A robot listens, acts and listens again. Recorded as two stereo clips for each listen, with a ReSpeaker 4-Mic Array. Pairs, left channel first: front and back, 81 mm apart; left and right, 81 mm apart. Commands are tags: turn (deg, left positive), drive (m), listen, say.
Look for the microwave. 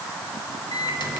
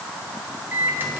<turn deg="-25"/>
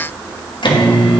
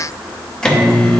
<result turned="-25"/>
<turn deg="10"/>
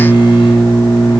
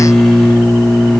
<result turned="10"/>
<say>Facing the microwave.</say>